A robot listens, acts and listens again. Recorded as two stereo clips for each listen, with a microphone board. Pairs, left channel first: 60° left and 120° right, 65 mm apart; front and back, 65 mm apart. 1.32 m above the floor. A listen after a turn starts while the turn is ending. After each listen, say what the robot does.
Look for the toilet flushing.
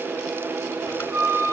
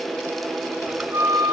Keep listening.
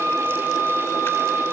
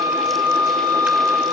Keep listening.
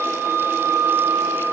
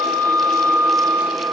I can't make out a toilet flushing to turn to.